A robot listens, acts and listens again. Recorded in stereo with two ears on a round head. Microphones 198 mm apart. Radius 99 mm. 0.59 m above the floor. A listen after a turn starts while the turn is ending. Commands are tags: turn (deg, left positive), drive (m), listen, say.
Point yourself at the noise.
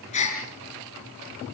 <turn deg="30"/>
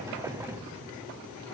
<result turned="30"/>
<listen/>
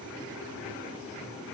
<say>I heard a gasp, but can't make it out now. It was about straight ahead or 120° left.</say>